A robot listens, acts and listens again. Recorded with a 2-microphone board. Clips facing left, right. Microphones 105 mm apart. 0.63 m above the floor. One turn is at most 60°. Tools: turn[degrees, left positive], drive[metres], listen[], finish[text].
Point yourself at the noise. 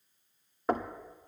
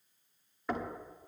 Thought: The knocking: about 45° left or 135° left.
Action: turn[45]
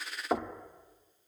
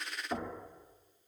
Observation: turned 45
Thought: So it is at 80° left.
Action: turn[60]
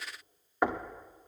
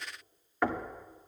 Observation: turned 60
Thought: The knocking is now 20° left.
Action: turn[20]
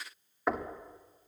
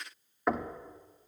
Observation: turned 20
Action: finish[Found it: knocking, straight ahead.]